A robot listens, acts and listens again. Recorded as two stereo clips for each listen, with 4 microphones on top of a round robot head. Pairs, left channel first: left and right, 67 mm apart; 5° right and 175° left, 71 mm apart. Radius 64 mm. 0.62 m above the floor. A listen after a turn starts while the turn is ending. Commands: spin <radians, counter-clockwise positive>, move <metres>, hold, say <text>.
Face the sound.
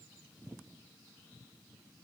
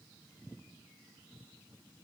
hold
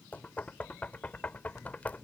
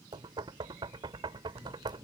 spin 2.79
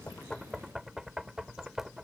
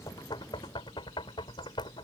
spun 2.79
say Facing the knocking.